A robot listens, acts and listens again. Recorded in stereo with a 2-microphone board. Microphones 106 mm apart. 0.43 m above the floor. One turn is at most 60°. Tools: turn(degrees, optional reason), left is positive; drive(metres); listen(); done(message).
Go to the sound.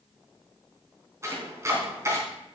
turn(degrees=-25, reason="The chopping: about 25° right or 155° right.")
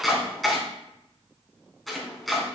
drive(metres=1.0)
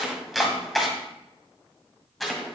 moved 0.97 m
drive(metres=1.0)
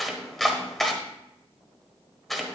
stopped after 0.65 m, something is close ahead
done("I am next to the chopping.")